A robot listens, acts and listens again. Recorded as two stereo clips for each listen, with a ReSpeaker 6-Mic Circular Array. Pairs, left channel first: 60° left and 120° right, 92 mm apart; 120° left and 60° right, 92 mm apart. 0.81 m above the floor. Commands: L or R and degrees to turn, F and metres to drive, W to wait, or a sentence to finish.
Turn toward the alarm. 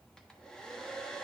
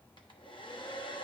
W
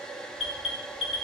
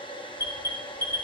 L60
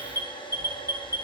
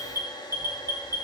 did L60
Found it: an alarm, straight ahead.